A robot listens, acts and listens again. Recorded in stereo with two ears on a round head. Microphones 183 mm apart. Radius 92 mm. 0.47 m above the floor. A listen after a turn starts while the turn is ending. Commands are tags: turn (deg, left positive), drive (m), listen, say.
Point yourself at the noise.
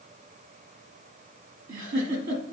<turn deg="-60"/>
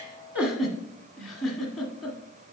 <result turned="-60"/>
<say>Facing the giggle, 1 to 2 m away.</say>